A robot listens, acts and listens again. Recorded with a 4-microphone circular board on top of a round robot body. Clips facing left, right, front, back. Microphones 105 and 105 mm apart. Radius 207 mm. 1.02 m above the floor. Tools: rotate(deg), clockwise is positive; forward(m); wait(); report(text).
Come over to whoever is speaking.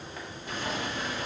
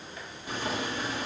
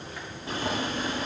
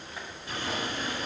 wait()
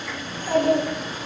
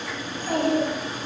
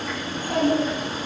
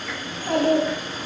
rotate(-160)
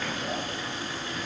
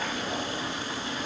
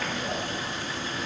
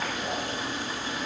wait()
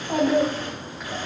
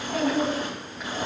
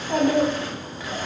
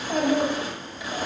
rotate(-55)
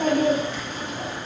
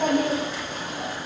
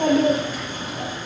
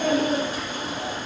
forward(1.0)
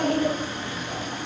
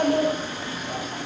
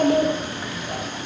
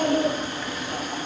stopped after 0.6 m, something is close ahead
report("Blocked. The child speaking is further on, straight ahead.")